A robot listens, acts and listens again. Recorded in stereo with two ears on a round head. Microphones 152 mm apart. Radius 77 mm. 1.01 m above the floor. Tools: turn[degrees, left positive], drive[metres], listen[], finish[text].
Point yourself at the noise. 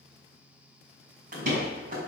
Thought: The door slam: about 50° right or 130° right.
Action: turn[-50]
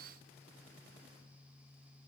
Action: listen[]
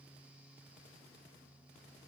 Action: finish[I heard a door slam, but can't make it out now. It was about straight ahead or 80° right.]